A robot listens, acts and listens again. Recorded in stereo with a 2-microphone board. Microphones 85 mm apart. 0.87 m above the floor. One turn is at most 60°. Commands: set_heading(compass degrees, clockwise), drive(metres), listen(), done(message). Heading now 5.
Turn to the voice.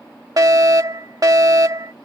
listen()
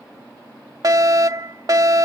listen()
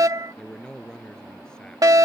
set_heading(335)
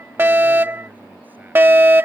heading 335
listen()
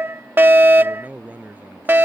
set_heading(355)
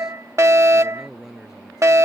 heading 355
done("Found it: a man speaking, straight ahead.")